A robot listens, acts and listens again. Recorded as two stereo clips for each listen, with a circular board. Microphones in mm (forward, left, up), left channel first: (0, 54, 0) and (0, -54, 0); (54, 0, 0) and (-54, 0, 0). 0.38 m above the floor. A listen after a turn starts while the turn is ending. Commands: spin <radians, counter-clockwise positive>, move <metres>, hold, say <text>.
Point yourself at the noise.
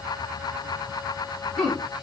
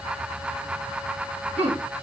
spin 3.14
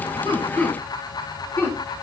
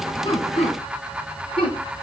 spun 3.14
spin 0.35
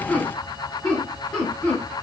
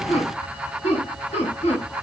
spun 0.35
spin 0.17
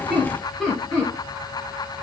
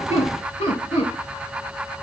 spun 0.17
say Found it: laughter, straight ahead.